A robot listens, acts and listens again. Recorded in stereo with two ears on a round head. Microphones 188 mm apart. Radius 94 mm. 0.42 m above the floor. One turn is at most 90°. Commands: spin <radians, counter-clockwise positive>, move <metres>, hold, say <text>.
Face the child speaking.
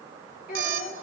spin 0.70
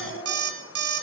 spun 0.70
say Found it: a child speaking, straight ahead, over 4 m away.